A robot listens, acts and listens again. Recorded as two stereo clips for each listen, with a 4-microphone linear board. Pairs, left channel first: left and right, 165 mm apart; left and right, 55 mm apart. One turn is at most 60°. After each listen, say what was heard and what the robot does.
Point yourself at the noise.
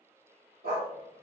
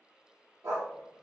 Turn 60° right.
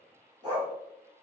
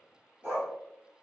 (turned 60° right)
So it is at 25° right. Turn 25° right.
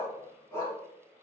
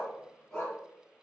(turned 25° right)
The dog barking is now 15° left. Turn 15° left.
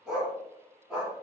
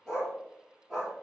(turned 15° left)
Facing the dog barking.